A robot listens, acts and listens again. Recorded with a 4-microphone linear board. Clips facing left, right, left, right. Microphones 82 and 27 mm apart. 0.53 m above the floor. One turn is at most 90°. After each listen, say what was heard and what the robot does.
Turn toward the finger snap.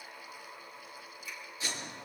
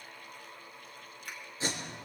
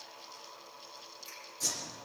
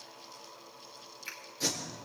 The finger snap: about 65° right or 115° right. Turn 65° right.
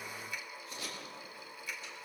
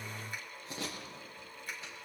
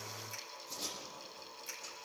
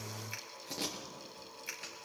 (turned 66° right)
So it is at 45° right. Turn 45° right.
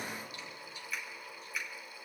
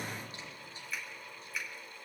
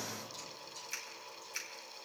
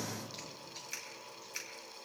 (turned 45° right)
Found it: a finger snap, straight ahead.